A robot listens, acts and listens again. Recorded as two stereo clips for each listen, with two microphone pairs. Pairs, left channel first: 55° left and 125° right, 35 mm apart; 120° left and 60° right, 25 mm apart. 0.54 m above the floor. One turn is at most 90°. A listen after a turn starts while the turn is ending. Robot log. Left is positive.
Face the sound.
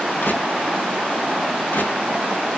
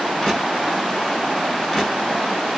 note: The crushing: 45° left.
cmd yaw +45
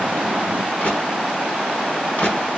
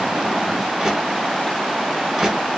note: The crushing is now 15° left.
cmd yaw +15
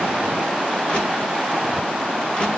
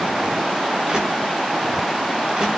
end: Facing the crushing.